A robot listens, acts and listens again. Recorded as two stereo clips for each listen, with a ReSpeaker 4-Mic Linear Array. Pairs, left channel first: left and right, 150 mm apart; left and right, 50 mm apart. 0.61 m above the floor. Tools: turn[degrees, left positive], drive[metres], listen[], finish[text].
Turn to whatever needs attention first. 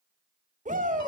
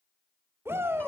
Thought: The shout: about 60° right or 120° right.
Action: turn[-60]
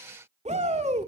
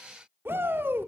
Thought: So it is at 55° right.
Action: turn[-55]
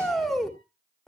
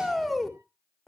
Action: finish[Found it: a shout, straight ahead, 1 to 2 m away.]